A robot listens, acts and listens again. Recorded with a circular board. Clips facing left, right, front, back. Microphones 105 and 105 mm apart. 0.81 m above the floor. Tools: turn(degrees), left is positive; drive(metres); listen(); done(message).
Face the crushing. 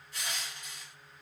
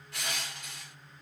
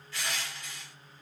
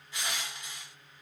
turn(degrees=-110)
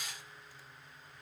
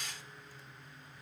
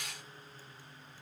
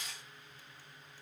turn(degrees=10)
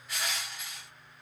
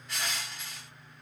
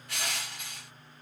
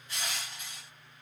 done("Found it: crushing, straight ahead, 1 to 2 m away.")